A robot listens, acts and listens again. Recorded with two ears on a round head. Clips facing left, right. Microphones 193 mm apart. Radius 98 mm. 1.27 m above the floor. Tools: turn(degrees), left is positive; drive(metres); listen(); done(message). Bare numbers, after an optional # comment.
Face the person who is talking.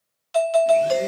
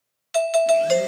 listen()
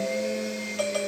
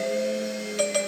listen()
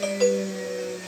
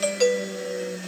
done("I can't make out anyone speaking to turn to.")